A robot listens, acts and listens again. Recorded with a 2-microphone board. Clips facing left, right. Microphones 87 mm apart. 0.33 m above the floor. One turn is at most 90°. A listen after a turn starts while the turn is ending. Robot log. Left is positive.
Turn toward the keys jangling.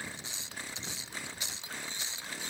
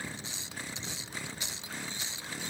cmd idle
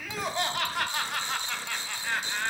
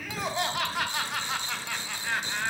cmd idle
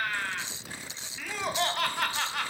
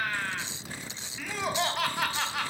end: I can't make out keys jangling to turn to.